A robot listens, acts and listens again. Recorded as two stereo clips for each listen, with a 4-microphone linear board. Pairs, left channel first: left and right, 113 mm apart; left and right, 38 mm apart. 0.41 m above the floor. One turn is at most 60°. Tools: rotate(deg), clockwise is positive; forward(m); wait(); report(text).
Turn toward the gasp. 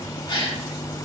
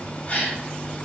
rotate(-45)
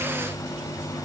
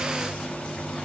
wait()
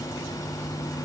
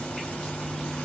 report("I heard a gasp, but can't make it out now. It was about straight ahead or 90° left.")